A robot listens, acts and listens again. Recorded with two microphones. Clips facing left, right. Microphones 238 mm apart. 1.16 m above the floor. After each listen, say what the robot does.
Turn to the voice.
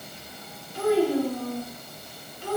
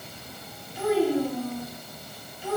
Turn 90° left.
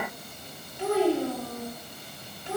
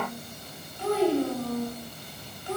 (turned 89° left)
Turn 25° left.
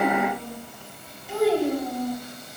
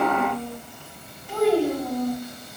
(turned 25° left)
Turn 10° left.
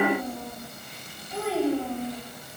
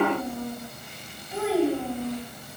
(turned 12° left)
Found it: a child speaking, straight ahead, over 4 m away.